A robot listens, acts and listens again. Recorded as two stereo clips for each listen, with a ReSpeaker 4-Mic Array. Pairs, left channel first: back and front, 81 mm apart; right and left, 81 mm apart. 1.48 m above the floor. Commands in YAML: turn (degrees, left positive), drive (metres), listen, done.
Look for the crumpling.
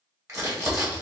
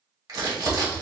turn: 50
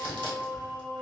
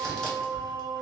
done: "Found it: crumpling, straight ahead, 1 to 2 m away."